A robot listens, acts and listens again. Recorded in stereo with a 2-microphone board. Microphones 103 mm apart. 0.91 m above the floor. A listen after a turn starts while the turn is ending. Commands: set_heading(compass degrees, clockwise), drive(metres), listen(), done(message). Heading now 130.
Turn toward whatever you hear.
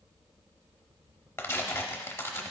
set_heading(105)
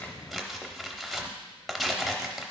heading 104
done("Facing the tearing paper.")